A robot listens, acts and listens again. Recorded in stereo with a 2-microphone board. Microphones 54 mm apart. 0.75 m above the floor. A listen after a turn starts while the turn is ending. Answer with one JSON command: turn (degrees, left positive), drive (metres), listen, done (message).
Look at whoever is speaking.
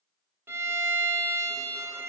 {"listen": true}
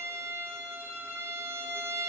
{"listen": true}
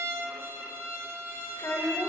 {"turn": 70}
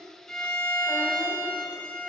{"listen": true}
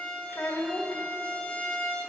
{"turn": 40}
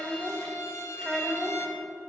{"done": "Found it: a child speaking, straight ahead, 1 to 2 m away."}